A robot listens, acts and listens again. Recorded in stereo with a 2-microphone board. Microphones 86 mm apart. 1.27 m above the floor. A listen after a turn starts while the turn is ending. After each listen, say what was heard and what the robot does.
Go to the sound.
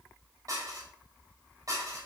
The dishes clattering: about 45° right or 135° right. Turn 45° right.
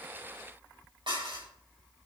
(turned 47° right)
So it is at 85° right. Turn 85° right.
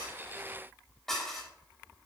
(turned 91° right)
Drive 1.0 m forward.
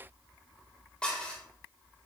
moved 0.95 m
The dishes clattering is now 15° left. Turn 15° left.
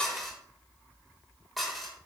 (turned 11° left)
Drive 1.0 m forward.
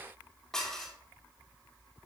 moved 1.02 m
Drive 1.0 m forward.
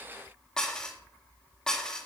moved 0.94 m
The dishes clattering is now 10° left. Turn 10° left.
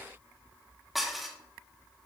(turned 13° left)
Drive 1.0 m forward.
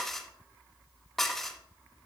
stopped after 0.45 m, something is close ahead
Arrived at the dishes clattering, straight ahead.